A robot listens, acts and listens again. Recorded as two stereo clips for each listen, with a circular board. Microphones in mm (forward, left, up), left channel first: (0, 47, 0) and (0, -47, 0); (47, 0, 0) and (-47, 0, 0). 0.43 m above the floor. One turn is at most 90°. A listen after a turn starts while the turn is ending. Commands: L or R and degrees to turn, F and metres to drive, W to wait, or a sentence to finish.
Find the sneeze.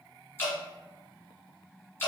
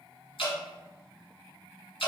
W
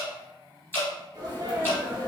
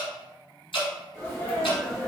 R60
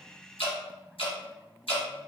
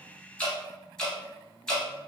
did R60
Facing where the sneeze came from. I can't hear it now.